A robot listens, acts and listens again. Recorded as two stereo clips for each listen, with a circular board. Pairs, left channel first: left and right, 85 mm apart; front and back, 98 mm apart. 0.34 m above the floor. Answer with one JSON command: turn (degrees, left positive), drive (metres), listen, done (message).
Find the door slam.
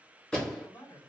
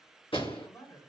{"turn": 10}
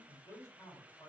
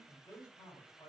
{"done": "Facing where the door slam came from. I can't hear it now."}